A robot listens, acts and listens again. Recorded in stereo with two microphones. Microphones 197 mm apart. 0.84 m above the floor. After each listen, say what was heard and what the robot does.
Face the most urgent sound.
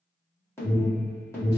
Turn 30° left.
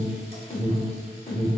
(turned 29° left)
So it is at 135° left. Turn 135° left.
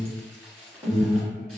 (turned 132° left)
Found it: an alarm, straight ahead.